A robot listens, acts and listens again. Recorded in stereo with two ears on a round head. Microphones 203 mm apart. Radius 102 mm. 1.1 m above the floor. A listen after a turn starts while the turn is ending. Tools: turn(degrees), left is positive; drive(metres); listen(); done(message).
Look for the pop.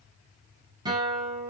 listen()
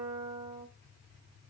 listen()
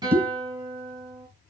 turn(degrees=-30)
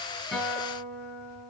listen()
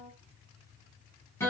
done("I heard a pop, but can't make it out now. It was about 20° left or 140° right.")